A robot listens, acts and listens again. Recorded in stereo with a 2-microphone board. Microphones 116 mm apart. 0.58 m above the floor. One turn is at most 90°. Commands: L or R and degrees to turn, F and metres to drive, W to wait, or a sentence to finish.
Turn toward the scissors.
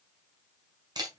W
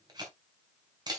W
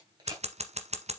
R70
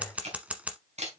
R10
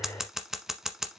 Facing the scissors.